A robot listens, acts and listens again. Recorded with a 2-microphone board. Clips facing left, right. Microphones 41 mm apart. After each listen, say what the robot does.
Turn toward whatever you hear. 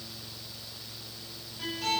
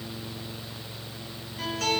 Turn 90° right.
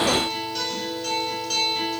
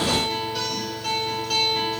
Facing the guitar.